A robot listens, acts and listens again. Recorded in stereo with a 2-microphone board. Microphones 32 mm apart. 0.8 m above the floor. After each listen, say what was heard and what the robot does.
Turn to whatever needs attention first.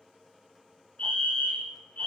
The fire alarm: about 50° left or 130° left. Turn 50° left.
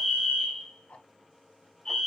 So it is at 15° left. Turn 15° left.
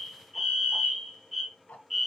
Found it: a fire alarm, straight ahead.